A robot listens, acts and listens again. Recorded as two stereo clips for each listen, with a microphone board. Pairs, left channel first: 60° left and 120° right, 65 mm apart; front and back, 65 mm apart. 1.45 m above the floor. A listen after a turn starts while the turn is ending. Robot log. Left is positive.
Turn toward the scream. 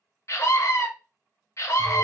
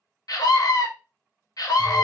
note: The scream: 20° left.
cmd yaw +20
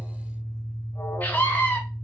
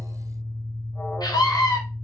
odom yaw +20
end: Found it: a scream, straight ahead, under 1 m away.